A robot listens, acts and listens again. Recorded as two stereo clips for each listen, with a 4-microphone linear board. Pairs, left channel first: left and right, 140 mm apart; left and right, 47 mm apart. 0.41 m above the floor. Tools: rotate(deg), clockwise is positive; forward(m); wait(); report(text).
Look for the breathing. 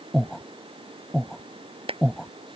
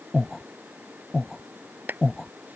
rotate(-30)
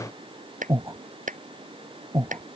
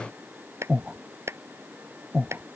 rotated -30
rotate(25)
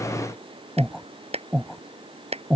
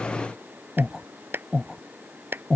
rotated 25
report("Found it: breathing, straight ahead.")